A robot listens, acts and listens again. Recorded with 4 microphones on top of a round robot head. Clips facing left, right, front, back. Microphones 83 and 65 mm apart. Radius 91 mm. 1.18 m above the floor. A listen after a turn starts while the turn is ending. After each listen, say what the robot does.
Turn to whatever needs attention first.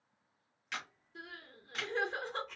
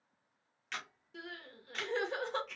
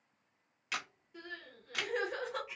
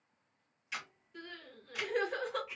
Turn 90° right.
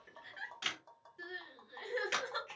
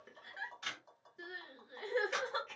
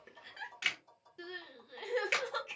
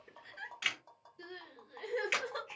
Turn 10° right.
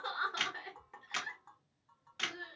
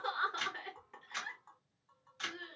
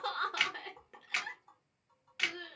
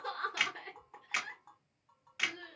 Facing the crying, under 1 m away.